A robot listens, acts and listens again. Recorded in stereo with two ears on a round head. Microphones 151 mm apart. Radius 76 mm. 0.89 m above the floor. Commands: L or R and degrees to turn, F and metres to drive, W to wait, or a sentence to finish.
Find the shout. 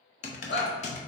L70
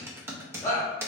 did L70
L20
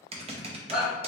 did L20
Facing the shout, 1 to 2 m away.